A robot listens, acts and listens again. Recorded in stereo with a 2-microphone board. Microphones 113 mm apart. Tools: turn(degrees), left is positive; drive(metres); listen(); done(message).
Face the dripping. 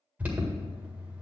listen()
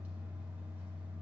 listen()
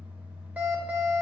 done("I can't make out dripping to turn to.")